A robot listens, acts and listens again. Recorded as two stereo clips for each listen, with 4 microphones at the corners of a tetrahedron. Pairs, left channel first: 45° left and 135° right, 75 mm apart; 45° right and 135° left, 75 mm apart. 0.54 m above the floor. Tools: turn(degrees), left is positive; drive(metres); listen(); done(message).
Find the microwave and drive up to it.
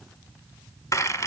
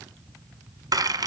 listen()
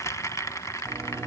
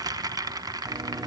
turn(degrees=160)
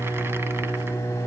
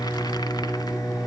turn(degrees=-10)
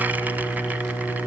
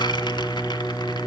drive(metres=1.0)
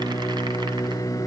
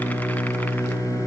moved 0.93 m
drive(metres=1.0)
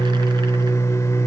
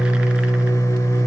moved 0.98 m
drive(metres=1.0)
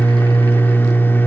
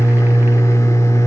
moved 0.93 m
turn(degrees=-10)
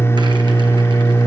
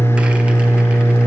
drive(metres=1.0)
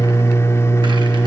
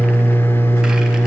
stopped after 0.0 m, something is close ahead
done("Arrived at the microwave, straight ahead.")